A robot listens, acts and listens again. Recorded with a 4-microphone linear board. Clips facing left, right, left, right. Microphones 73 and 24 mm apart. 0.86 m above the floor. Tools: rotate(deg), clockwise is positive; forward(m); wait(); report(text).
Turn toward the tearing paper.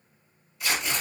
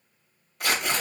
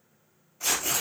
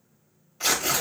rotate(55)
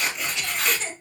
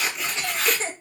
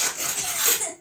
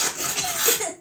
report("Found it: tearing paper, straight ahead.")